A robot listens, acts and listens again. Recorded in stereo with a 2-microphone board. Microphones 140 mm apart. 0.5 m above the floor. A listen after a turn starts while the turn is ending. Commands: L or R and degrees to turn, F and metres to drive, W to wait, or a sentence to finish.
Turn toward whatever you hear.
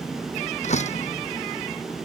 L55
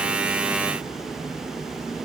W
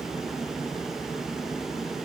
I heard a door slam, but can't make it out now. It was about straight ahead or 70° left.